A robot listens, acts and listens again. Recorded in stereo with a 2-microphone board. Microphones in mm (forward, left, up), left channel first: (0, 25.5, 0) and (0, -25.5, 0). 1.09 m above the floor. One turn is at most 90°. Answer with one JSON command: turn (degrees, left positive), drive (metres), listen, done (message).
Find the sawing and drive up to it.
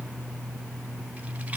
{"listen": true}
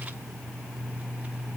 {"listen": true}
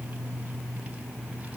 {"done": "I can't make out sawing to turn to."}